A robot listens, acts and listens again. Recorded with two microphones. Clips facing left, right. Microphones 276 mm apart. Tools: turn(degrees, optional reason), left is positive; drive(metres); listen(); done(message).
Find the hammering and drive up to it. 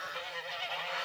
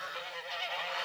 listen()
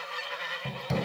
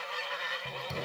turn(degrees=75, reason="The hammering: about 75° left or 105° left.")
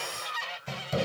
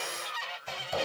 turn(degrees=25, reason="So it is at 25° left.")
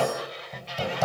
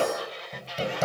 turn(degrees=-25, reason="The hammering is now 25° right.")
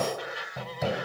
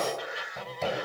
drive(metres=1.0)
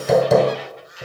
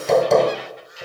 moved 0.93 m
drive(metres=1.0)
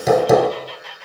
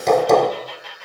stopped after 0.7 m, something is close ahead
turn(degrees=10, reason="The hammering is now 10° left.")
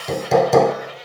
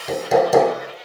done("I am next to the hammering.")